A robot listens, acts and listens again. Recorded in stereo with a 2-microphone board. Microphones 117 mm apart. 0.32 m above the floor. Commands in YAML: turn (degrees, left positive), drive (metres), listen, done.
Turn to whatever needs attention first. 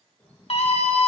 turn: 60
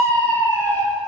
turn: 20
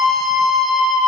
done: "Facing the scream."